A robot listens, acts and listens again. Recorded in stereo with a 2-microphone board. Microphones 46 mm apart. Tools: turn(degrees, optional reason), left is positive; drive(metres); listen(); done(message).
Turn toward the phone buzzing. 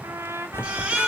turn(degrees=60, reason="The phone buzzing: about 60° left or 120° left.")
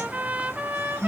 turn(degrees=60, reason="So it is at 60° left.")
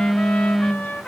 done("Facing the phone buzzing, 1 to 2 m away.")